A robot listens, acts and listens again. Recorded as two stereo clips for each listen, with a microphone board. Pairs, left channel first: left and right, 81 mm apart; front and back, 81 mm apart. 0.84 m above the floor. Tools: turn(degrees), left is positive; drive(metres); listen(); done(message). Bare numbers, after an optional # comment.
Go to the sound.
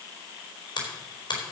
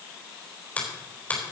# The finger snap: 70° left.
turn(70)
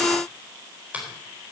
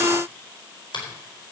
# The finger snap is now 20° right.
turn(-20)
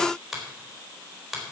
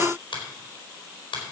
drive(1.0)
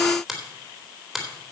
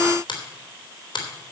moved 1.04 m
drive(1.0)
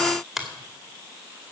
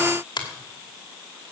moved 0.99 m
drive(1.0)
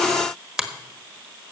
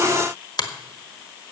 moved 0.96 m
# The finger snap is now 10° right.
turn(-10)
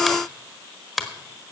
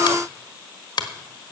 drive(1.0)
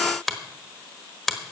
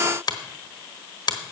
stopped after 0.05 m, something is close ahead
done("Arrived at the finger snap, straight ahead.")